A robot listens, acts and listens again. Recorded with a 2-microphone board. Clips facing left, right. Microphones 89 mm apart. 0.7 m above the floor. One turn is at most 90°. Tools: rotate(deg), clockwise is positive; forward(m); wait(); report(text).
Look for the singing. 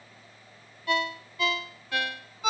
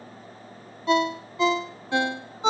wait()
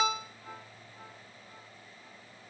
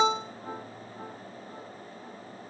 wait()
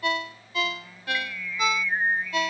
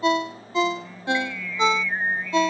rotate(-30)
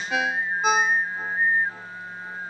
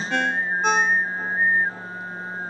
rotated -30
rotate(20)
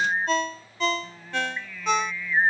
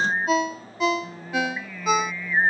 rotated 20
rotate(10)
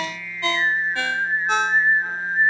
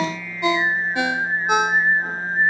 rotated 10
report("Facing the singing.")